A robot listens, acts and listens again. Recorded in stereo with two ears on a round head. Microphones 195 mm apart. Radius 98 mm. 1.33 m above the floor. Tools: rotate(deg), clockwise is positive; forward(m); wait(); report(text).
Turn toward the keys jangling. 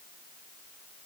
wait()
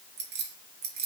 rotate(45)
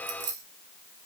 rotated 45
rotate(80)
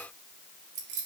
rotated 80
rotate(55)
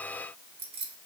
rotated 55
rotate(25)
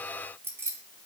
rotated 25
rotate(10)
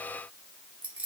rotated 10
report("Found it: keys jangling, straight ahead, 2 to 4 m away.")